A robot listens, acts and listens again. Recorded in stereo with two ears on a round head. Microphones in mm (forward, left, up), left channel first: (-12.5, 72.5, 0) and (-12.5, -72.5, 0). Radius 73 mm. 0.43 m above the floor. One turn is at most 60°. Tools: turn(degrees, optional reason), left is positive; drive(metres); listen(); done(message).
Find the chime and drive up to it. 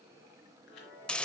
turn(degrees=60)
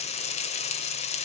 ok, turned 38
turn(degrees=50, reason="Nothing new. It was at 50° left.")
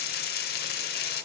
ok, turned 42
turn(degrees=10, reason="Nothing new. It was at 10° left.")
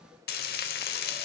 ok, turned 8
done("I heard a chime from this way, but can't make it out now. I did not reach it.")